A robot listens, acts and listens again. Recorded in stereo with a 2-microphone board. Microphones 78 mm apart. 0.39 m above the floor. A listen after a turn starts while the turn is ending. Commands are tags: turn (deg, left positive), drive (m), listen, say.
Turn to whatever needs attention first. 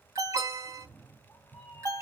<turn deg="-40"/>
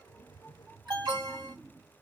<turn deg="-100"/>
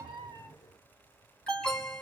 <turn deg="10"/>
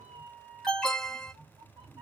<say>Found it: an alarm, straight ahead, 1 to 2 m away.</say>